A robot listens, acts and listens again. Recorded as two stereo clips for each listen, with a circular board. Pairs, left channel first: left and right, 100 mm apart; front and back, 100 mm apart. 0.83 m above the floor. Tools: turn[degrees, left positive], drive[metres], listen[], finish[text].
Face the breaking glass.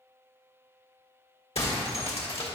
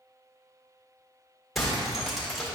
Thought: The breaking glass: 90° left.
Action: turn[90]
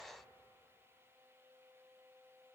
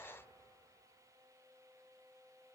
Action: finish[I heard breaking glass from this way, but can't make it out now.]